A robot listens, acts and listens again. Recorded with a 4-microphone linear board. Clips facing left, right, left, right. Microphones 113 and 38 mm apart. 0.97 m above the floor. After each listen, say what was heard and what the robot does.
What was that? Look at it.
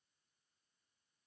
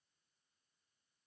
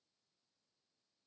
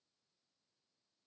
Keep listening.
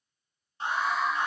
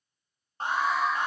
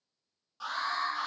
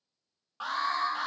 The alarm: about 45° right or 135° right. Turn 45° right.
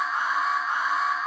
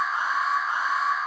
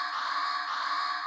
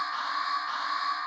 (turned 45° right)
Found it: an alarm, straight ahead, 1 to 2 m away.